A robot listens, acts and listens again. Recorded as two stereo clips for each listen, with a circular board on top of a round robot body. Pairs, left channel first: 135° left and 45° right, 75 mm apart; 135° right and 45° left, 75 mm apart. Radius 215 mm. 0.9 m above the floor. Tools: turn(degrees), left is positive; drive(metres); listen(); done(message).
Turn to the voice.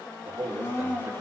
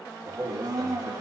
turn(degrees=15)
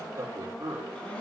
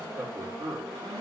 done("Found it: a man speaking, straight ahead, over 4 m away.")